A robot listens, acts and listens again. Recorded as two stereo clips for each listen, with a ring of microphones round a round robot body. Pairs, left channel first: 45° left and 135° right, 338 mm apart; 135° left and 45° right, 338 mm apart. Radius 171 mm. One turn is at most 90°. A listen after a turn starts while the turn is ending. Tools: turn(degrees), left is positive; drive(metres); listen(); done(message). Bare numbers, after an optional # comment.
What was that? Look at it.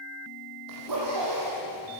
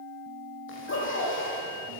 # The zipper: 170° right.
turn(-90)
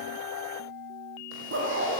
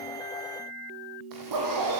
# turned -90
# The zipper is now 80° right.
turn(-80)
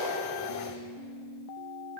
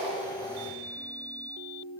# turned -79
listen()
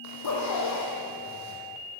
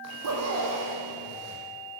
done("Found it: a zipper, straight ahead, over 4 m away.")